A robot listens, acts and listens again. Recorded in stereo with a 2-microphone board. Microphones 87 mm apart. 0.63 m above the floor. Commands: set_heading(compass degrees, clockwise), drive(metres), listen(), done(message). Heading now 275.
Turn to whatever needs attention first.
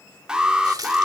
set_heading(305)
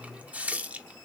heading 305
listen()
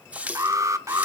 set_heading(85)
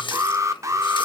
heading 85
set_heading(125)
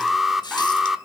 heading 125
done("Found it: an alarm, straight ahead.")